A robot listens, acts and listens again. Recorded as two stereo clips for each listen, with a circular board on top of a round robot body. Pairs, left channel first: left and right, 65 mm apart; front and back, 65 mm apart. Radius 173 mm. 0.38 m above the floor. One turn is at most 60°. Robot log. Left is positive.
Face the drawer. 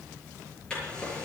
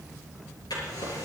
note: The drawer: 10° left.
cmd yaw +10
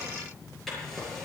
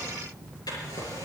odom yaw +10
end: Facing the drawer.